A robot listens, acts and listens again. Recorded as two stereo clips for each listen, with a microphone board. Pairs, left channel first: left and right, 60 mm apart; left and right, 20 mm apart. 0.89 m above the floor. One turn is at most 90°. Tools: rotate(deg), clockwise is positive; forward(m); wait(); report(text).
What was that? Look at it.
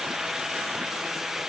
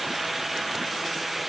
wait()
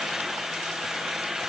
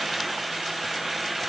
wait()
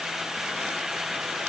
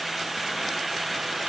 report("I can't make out anything to turn to.")